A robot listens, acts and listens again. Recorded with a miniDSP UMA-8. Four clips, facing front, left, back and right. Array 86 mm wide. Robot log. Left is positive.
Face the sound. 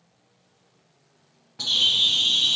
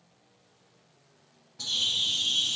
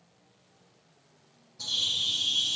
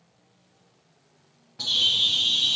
note: The bird: 20° right.
cmd yaw -20
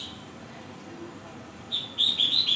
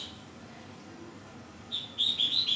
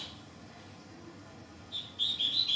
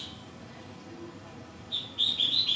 end: Found it: a bird, straight ahead, under 1 m away.